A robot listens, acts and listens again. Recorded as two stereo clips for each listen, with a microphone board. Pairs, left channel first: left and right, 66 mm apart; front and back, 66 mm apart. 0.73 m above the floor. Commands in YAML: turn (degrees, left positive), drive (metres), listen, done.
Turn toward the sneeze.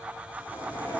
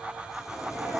turn: 120
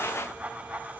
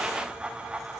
done: "Facing where the sneeze came from. I can't hear it now."